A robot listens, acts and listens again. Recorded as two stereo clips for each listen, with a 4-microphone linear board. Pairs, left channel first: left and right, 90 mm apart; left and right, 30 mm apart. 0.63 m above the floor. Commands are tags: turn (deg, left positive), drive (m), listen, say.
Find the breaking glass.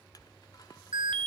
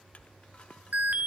<listen/>
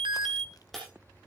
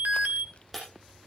<turn deg="30"/>
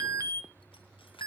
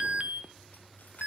<listen/>
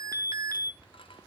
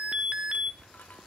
<say>I heard breaking glass, but can't make it out now. It was about 25° right or 145° left.</say>